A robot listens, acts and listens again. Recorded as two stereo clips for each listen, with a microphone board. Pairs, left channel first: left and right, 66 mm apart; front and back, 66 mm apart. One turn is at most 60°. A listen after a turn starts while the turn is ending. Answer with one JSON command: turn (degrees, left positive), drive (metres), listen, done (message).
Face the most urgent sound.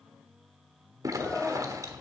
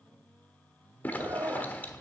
{"turn": 60}
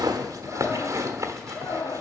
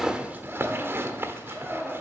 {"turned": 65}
{"turn": 60}
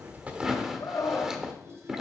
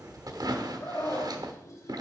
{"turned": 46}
{"turn": 55}
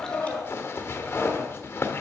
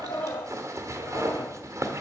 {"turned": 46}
{"listen": true}
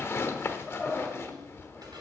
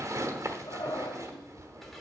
{"done": "Facing the scream."}